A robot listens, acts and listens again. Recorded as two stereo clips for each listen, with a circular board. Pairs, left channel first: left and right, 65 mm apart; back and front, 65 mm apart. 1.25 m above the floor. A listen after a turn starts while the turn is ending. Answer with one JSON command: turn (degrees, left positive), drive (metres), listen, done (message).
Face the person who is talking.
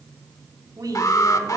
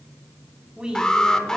{"turn": -75}
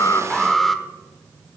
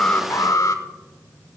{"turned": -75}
{"listen": true}
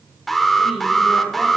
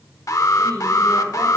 {"listen": true}
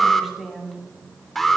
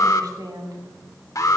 {"done": "Facing the woman speaking."}